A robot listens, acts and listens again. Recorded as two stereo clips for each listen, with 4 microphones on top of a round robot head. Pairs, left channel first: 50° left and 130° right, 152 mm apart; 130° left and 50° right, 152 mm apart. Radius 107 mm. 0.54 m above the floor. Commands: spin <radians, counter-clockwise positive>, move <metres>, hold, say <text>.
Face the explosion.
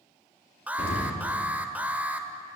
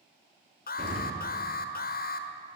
say Facing the explosion, over 4 m away.